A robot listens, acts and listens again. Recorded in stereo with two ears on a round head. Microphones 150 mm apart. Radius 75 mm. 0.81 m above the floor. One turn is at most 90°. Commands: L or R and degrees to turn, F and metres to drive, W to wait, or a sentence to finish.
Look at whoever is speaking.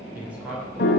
R30
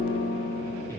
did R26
W
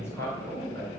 L15
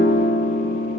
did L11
W
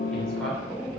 Facing the man speaking.